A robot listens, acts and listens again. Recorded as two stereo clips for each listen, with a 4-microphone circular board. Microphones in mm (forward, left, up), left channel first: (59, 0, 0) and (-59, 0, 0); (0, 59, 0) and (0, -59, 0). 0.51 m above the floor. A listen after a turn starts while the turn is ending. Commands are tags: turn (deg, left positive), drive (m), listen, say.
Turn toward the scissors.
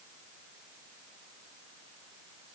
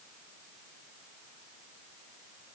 <listen/>
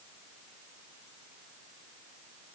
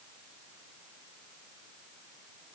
<listen/>
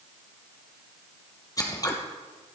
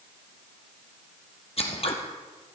<turn deg="60"/>
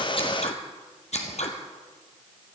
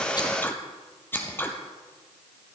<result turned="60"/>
<turn deg="20"/>
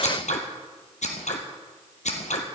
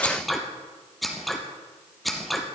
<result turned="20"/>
<say>Found it: scissors, straight ahead, 2 to 4 m away.</say>